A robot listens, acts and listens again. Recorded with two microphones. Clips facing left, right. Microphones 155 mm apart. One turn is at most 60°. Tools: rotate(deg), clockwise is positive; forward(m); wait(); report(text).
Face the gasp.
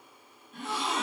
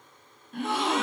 rotate(60)
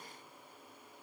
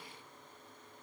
wait()
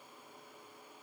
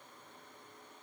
report("I heard a gasp, but can't make it out now. It was about 5° right or 55° right.")